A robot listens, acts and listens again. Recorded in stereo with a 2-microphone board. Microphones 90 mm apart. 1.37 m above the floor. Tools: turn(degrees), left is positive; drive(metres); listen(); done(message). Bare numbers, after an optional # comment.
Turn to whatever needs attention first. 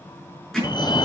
# The fire alarm: about 50° left or 130° left.
turn(50)
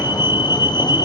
# So it is at 65° left.
turn(65)
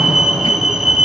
done("Found it: a fire alarm, straight ahead, 1 to 2 m away.")